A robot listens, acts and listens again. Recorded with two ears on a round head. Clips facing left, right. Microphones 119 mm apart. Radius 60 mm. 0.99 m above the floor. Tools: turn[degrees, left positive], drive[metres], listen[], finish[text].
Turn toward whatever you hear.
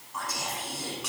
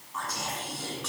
Action: turn[30]
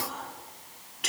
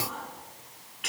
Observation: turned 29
Thought: So it is at 135° left.
Action: turn[135]
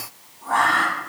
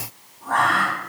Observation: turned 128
Action: finish[Facing the whispering.]